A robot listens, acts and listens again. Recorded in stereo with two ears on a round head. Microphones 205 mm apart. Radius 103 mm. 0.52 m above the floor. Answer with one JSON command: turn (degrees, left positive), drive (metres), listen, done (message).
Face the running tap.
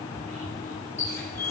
{"turn": 30}
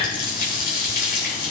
{"turn": 140}
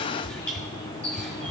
{"done": "Found it: a running tap, straight ahead, over 4 m away."}